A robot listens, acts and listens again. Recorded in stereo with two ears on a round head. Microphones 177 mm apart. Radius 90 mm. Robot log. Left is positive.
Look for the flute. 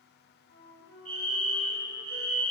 note: The flute: about 65° left or 115° left.
cmd yaw +65
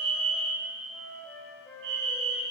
end: Facing the flute, 2 to 4 m away.